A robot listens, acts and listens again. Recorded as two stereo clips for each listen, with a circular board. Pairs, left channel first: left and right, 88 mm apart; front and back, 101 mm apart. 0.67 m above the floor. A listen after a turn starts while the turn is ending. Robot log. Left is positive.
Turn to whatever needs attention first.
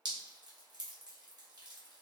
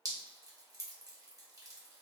cmd idle
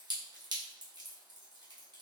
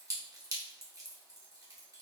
cmd idle
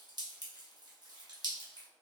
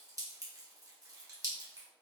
end: I can't make out anything urgent to turn to.